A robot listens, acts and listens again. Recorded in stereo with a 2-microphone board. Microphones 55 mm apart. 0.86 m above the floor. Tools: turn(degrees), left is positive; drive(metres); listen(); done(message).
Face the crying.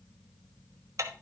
listen()
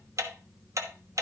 listen()
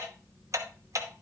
done("I can't make out crying to turn to.")